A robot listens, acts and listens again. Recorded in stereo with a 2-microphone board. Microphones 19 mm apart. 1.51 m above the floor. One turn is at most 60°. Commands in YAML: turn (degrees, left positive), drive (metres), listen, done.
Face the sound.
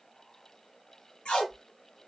turn: 60
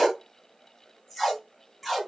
turn: 10
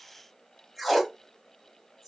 done: "Found it: tape being pulled, straight ahead."